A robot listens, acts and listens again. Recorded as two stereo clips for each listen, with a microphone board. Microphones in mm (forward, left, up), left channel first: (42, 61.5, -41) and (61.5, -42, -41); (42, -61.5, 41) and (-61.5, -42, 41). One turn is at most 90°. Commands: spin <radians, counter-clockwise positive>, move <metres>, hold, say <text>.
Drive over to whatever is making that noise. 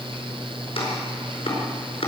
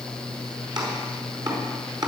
spin 1.57
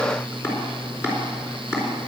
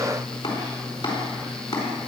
spin 0.61
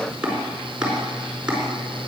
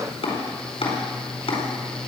move 1.0
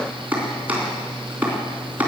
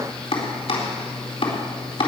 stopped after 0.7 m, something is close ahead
say Something is in my way. I am facing the chopping but have not reached it.